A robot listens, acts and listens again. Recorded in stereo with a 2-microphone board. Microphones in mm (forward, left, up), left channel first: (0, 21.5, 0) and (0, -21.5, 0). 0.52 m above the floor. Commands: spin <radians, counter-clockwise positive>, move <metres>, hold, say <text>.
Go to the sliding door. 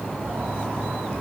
spin -0.96
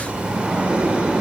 spin -0.61
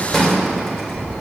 spin 0.17
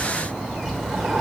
move 1.0
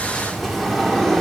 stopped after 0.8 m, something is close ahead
say I am next to the sliding door.